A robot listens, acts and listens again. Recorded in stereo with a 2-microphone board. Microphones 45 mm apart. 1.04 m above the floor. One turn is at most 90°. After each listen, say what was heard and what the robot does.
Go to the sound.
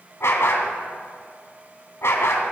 The dog barking: about 75° left or 105° left. Turn 75° left.
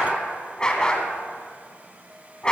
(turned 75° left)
So it is at 20° left. Turn 20° left.
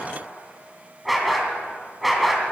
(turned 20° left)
Drive 1.0 m forward.
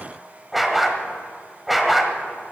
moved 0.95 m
Drive 1.0 m forward.
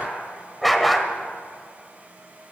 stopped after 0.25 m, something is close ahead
Arrived at the dog barking, straight ahead.